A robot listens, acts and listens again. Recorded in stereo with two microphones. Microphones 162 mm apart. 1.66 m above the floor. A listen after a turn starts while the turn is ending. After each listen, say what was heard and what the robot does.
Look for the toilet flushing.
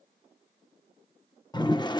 The toilet flushing: about 25° left or 155° left. Turn 25° left.
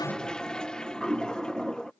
Found it: a toilet flushing, straight ahead.